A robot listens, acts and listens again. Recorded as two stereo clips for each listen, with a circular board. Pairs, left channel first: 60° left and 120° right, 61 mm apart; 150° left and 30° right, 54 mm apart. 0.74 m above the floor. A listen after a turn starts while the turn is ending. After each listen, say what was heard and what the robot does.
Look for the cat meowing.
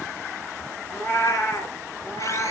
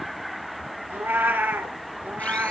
The cat meowing: 30° left. Turn 30° left.
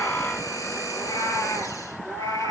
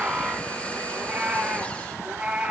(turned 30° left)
The cat meowing is now 40° left. Turn 40° left.
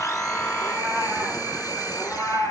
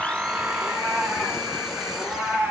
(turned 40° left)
The cat meowing is now 20° left. Turn 20° left.
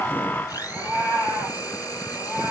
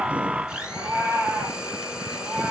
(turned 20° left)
Facing the cat meowing.